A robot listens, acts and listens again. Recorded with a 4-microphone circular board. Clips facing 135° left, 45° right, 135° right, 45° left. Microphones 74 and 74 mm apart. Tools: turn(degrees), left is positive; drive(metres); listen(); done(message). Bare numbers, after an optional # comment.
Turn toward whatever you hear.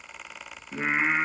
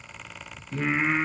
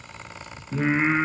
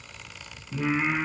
# The singing: 160° right.
turn(-160)
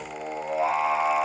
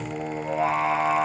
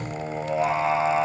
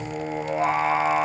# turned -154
done("Found it: singing, straight ahead, 2 to 4 m away.")